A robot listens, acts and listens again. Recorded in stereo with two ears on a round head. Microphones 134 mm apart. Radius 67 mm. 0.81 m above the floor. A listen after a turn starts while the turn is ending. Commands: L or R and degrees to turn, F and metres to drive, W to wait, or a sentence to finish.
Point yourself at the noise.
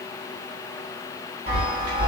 R45
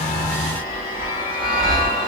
R10
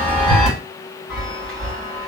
Facing the chime.